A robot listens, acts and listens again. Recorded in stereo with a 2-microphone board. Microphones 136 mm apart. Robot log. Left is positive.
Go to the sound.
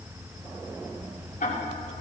cmd yaw +90
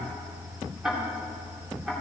cmd fwd 1.0
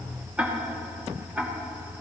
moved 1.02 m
note: The ticking is now 10° right.
cmd yaw -10
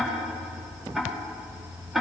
cmd fwd 1.0
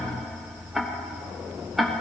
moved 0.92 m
cmd fwd 1.0
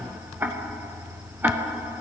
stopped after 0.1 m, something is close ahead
note: The ticking is now 15° right.
cmd yaw -15
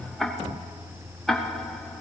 end: Arrived at the ticking, straight ahead.